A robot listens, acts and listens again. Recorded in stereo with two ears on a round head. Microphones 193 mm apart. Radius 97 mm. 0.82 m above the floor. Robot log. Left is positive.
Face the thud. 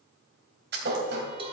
note: The thud: about 50° right or 130° right.
cmd yaw -50
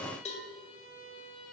cmd idle
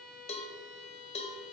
end: I heard a thud, but can't make it out now. It was about straight ahead or 80° right.